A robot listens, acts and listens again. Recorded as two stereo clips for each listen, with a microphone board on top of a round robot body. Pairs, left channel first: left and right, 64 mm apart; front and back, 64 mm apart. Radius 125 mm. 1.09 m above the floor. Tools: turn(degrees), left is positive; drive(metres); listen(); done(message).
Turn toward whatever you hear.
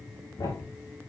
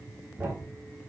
turn(degrees=115)
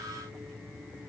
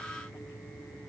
done("Facing where the thud came from. I can't hear it now.")